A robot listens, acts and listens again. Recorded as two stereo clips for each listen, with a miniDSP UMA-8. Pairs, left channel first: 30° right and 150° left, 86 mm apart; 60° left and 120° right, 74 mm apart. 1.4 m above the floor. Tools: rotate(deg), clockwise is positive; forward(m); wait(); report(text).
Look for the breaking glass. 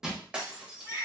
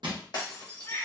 rotate(-75)
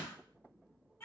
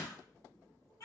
report("I heard breaking glass from this way, but can't make it out now.")